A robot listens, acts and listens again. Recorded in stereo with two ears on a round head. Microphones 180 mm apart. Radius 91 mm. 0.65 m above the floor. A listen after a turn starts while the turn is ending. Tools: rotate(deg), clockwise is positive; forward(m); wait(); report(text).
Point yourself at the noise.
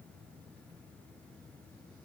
wait()
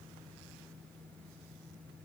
wait()
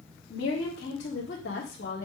rotate(-50)
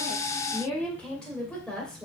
report("Found it: a woman speaking, straight ahead.")